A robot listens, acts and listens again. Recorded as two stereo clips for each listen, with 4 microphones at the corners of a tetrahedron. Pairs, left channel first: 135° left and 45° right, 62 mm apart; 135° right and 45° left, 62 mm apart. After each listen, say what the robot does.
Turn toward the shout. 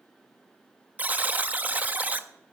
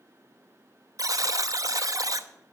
Keep listening.
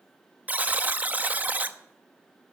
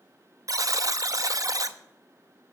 Keep listening.
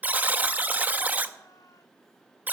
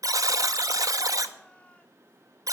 I can't make out a shout to turn to.